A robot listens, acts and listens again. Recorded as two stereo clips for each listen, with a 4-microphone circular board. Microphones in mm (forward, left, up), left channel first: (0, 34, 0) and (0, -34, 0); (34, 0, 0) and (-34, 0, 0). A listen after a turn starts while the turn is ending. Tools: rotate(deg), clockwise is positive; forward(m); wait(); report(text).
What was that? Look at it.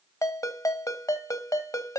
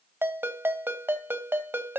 rotate(-120)
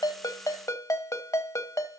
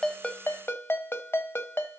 rotate(-55)
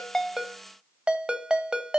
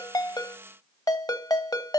rotate(15)
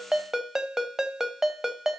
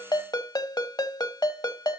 report("Facing the ringtone, 1 to 2 m away.")